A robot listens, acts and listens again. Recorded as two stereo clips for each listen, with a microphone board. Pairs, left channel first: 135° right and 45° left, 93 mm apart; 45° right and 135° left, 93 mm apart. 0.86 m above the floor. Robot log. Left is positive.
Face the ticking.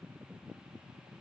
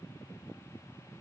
cmd idle
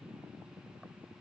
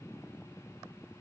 cmd idle
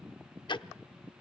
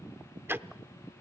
note: The ticking: 160° right.
cmd yaw -160
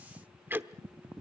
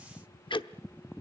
note: The ticking is now 25° right.
cmd yaw -25
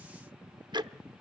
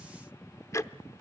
note: The ticking is now 10° left.
cmd yaw +10
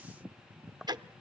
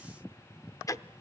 end: Found it: ticking, straight ahead.